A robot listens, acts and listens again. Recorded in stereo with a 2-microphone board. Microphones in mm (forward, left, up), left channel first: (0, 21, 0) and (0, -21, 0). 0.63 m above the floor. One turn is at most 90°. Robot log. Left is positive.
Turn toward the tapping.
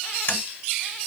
note: The tapping: about 55° left or 125° left.
cmd yaw +55
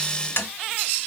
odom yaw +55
note: So it is at 70° left.
cmd yaw +70
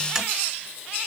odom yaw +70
note: The tapping is now 10° right.
cmd yaw -10
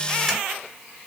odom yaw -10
cmd idle
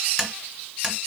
end: Found it: tapping, straight ahead, 1 to 2 m away.